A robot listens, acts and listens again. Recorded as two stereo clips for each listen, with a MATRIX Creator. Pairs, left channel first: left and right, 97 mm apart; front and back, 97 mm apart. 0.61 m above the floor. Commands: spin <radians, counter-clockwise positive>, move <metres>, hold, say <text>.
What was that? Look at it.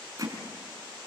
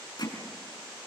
spin -0.70
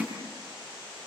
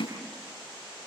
say Found it: hammering, straight ahead, over 4 m away.